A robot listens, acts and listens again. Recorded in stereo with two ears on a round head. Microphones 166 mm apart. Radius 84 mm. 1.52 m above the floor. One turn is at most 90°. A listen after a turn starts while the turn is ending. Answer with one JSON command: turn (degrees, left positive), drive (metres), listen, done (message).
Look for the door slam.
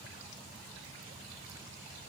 {"listen": true}
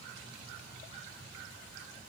{"listen": true}
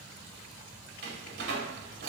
{"turn": -65}
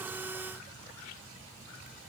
{"listen": true}
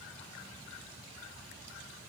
{"done": "I heard a door slam, but can't make it out now. It was about straight ahead or 50° right."}